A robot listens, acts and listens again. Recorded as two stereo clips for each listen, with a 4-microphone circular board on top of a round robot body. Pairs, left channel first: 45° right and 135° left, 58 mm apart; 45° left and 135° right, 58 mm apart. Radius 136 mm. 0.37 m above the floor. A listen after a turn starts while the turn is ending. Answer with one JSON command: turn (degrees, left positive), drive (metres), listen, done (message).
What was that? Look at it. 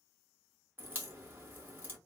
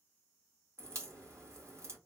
{"turn": -170}
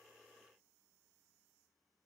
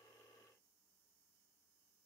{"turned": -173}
{"done": "I heard a crack from this way, but can't make it out now."}